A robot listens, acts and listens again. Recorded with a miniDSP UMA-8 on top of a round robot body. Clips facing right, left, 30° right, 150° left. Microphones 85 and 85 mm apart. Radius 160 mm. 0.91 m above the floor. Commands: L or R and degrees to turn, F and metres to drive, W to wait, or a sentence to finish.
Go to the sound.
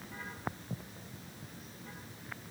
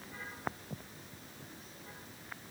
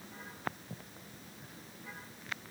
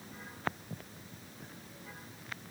W
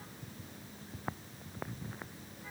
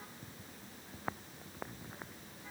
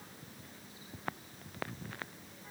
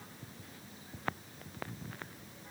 W
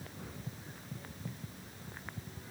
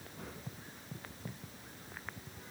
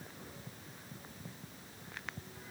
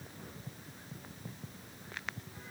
I can't make out anything to turn to.